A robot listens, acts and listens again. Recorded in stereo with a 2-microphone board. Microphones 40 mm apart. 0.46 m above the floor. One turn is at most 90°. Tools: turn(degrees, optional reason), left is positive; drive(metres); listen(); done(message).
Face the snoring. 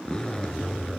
listen()
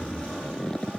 listen()
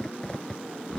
done("I can't make out snoring, only a zipper.")